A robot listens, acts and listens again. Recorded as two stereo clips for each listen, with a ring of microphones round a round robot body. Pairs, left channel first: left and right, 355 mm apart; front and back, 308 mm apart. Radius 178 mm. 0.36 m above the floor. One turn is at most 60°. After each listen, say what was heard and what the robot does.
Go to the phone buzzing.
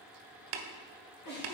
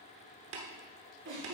Keep listening.
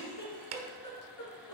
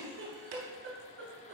Keep listening.
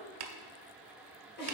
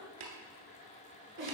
I can't make out a phone buzzing to turn to.